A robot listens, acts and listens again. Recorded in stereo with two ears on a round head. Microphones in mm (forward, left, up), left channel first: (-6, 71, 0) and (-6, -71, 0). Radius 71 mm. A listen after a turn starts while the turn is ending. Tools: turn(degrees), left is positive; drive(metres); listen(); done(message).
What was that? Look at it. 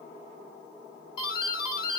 turn(degrees=30)
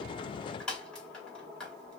done("Found it: a doorbell, straight ahead, 2 to 4 m away.")